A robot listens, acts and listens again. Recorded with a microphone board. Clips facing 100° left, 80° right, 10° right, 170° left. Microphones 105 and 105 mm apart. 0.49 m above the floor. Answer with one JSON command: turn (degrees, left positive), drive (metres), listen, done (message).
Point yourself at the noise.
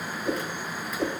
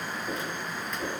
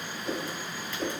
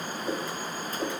{"turn": 95}
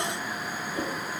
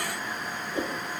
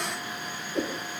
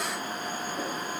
{"turn": -15}
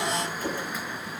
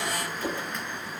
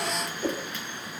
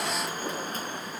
{"done": "Found it: a whoosh, straight ahead, 2 to 4 m away."}